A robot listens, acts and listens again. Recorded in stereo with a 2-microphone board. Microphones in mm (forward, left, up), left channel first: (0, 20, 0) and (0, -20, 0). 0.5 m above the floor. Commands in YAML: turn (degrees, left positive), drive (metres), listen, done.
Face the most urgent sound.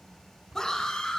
turn: 30
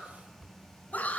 turn: 135
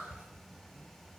listen: true
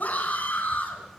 turn: 45
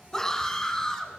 turn: 15
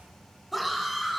done: "Facing the scream."